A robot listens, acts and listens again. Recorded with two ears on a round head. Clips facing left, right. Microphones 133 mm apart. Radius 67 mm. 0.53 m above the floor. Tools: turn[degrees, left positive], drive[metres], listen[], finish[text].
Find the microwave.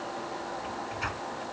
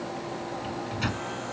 Thought: The microwave: about 40° right or 140° right.
Action: turn[-40]
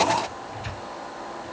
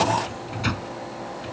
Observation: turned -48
Thought: So it is at 95° right.
Action: turn[-95]
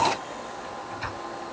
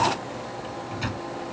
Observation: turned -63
Thought: The microwave is now 30° right.
Action: turn[-30]
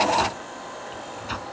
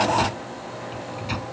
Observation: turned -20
Thought: The microwave is now 10° right.
Action: turn[-10]
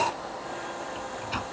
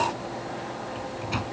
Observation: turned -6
Action: finish[Facing the microwave.]